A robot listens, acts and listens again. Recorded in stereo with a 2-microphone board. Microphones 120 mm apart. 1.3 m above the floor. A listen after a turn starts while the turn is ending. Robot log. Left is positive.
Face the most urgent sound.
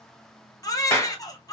note: The baby crying: about 30° left or 150° left.
cmd yaw +30
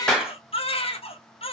note: So it is at 120° left.
cmd yaw +120
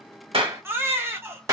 note: The baby crying is now 20° right.
cmd yaw -20
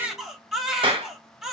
end: Facing the baby crying.